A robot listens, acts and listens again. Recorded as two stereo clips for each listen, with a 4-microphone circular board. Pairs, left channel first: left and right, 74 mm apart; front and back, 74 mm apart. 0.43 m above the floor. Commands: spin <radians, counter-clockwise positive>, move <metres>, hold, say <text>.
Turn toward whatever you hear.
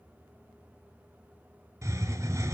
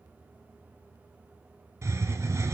spin -2.36
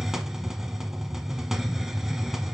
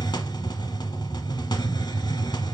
say Found it: a hiss, straight ahead, 1 to 2 m away.